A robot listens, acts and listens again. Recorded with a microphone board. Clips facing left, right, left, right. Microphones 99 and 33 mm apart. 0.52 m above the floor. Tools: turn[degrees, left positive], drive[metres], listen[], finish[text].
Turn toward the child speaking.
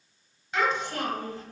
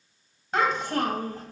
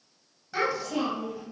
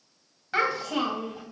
Thought: The child speaking: about 45° right or 135° right.
Action: turn[-45]
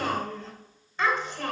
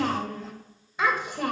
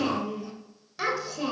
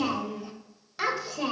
Thought: So it is at 15° right.
Action: turn[-15]
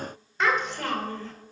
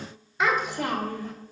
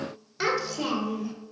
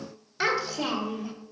Thought: The child speaking is now 15° right.
Action: turn[-15]
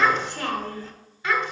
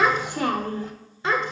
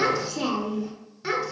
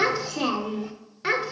Thought: The child speaking is now 30° right.
Action: turn[-30]
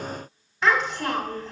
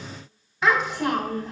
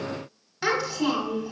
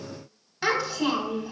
Action: finish[Found it: a child speaking, straight ahead, 1 to 2 m away.]